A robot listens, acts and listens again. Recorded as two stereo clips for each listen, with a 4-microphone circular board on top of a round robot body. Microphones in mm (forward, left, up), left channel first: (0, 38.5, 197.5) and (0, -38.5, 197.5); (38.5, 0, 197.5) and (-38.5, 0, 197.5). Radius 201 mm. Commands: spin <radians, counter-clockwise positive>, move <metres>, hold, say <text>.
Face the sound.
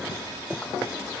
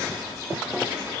hold
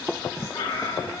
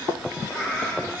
spin 1.31
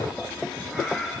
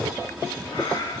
say Facing the cat meowing, 2 to 4 m away.